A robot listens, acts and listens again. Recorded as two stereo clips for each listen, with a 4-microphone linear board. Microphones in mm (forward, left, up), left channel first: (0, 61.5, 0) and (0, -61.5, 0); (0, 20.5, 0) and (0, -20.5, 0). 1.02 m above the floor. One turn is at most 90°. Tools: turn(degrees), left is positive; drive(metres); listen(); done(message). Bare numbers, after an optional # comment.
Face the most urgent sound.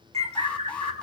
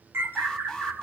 turn(30)
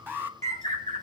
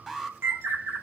# So it is at 20° right.
turn(-20)
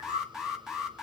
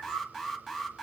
done("Facing the alarm.")